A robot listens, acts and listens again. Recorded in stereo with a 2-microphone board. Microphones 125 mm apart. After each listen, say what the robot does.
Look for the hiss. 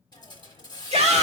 Turn 35° left.
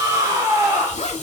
Keep listening.
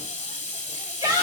Turn 105° left.
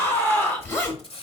Turn 50° left.
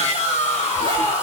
Keep listening.
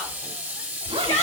Turn 15° right.
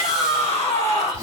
Keep listening.
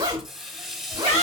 Found it: a hiss, straight ahead, under 1 m away.